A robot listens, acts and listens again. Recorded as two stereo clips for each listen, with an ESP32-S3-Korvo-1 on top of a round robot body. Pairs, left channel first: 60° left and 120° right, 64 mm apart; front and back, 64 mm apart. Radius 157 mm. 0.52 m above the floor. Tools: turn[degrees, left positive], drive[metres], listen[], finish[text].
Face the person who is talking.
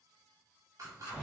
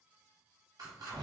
Action: listen[]
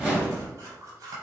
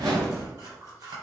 Action: listen[]
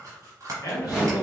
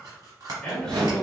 Thought: The man speaking: 75° left.
Action: turn[75]
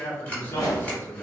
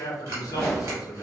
Action: finish[Found it: a man speaking, straight ahead.]